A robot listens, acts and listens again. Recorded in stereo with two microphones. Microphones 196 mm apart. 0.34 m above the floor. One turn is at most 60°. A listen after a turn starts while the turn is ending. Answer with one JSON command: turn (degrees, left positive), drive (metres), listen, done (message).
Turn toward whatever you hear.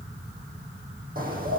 {"turn": -45}
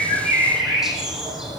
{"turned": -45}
{"done": "Found it: a bird, straight ahead, over 4 m away."}